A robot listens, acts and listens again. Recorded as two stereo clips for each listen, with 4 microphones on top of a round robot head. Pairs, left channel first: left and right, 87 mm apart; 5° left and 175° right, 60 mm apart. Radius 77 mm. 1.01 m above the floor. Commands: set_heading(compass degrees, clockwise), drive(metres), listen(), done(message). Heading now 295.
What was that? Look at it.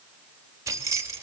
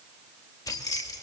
set_heading(325)
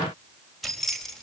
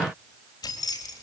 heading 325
done("Found it: keys jangling, straight ahead, 2 to 4 m away.")